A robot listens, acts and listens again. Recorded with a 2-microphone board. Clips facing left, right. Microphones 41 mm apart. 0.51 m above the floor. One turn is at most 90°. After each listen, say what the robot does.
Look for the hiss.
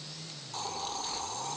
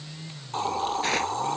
Turn 30° right.
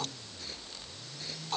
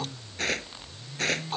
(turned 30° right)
Found it: a hiss, straight ahead.